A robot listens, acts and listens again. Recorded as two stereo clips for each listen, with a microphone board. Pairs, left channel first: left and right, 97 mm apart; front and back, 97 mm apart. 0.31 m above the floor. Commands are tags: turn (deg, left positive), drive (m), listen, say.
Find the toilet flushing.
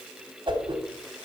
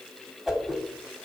<listen/>
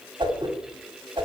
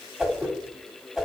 <listen/>
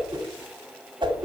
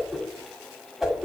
<say>I can't make out a toilet flushing to turn to.</say>